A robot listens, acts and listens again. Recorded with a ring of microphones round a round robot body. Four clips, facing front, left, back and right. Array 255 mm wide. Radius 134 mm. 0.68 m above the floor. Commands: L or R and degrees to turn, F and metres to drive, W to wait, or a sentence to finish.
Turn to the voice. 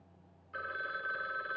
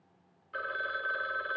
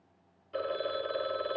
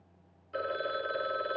W
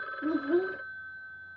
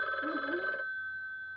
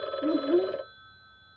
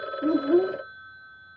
R105
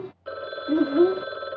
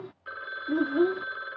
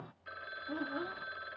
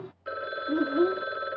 Facing the child speaking.